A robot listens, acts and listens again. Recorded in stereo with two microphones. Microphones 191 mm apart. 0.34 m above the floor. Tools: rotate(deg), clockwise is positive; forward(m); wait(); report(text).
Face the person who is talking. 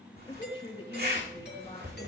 rotate(-30)
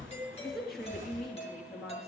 report("Found it: a woman speaking, straight ahead, over 4 m away.")